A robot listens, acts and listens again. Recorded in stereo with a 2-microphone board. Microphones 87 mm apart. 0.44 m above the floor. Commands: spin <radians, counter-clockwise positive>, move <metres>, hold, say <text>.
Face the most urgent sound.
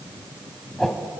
hold
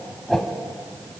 hold
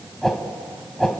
say I can't make out anything urgent to turn to.